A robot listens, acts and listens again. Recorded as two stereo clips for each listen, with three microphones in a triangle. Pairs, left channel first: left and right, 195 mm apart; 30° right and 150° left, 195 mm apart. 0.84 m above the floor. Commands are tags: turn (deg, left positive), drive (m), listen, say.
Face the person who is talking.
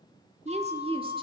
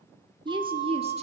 <turn deg="-150"/>
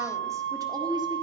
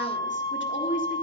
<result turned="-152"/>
<turn deg="-20"/>
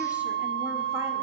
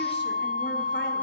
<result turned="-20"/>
<listen/>
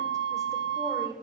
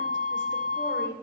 <turn deg="-20"/>
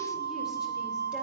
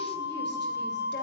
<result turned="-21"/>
<listen/>
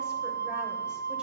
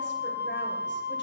<listen/>
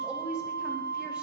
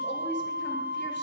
<say>Facing where the woman speaking came from. I can't hear it now.</say>